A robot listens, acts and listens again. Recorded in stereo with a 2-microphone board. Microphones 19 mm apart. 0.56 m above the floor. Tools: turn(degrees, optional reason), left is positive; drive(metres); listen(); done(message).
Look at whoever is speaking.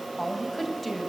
turn(degrees=30)
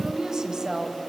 turn(degrees=-30, reason="So it is at 30° right.")
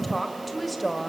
done("Facing the woman speaking, 2 to 4 m away.")